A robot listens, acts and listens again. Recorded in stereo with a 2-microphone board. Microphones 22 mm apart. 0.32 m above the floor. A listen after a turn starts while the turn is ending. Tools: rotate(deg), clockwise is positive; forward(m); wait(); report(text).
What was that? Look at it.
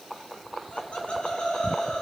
rotate(-50)
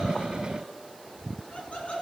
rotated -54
rotate(-75)
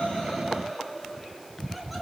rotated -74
report("Facing the laughter.")